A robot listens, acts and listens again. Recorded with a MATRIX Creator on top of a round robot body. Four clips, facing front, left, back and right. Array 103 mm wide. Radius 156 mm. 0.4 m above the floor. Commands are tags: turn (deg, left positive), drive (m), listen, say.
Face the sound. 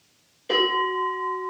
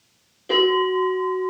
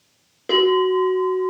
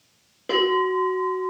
<turn deg="-155"/>
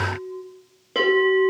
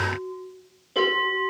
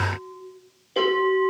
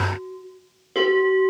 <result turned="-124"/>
<turn deg="-30"/>
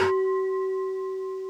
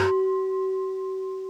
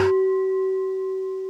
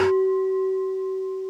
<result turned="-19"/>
<turn deg="-15"/>
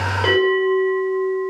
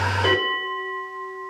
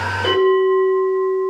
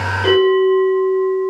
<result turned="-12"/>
<say>Found it: a bell, straight ahead.</say>